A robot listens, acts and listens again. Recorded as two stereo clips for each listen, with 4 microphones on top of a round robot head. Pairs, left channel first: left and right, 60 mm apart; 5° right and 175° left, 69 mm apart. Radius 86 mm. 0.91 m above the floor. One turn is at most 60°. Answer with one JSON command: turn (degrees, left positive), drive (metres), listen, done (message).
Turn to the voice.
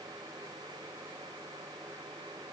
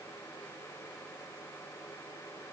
{"listen": true}
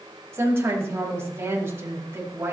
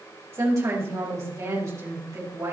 {"turn": -60}
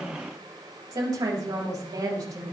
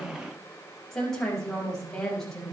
{"turn": -60}
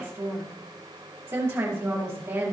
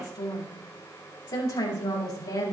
{"turn": -40}
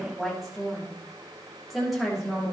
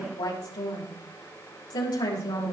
{"done": "Facing the woman speaking."}